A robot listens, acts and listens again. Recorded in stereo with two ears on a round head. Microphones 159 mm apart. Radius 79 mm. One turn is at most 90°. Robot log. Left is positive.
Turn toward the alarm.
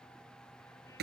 cmd idle
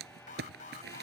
note: The alarm: about 50° left or 130° left.
cmd yaw +50
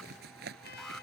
cmd idle
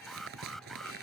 end: Found it: an alarm, straight ahead.